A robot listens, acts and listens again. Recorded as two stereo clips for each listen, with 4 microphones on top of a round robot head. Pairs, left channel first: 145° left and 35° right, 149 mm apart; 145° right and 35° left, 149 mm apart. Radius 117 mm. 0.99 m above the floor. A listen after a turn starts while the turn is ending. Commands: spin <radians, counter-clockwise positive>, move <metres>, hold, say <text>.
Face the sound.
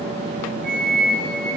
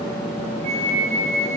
say Facing the flute.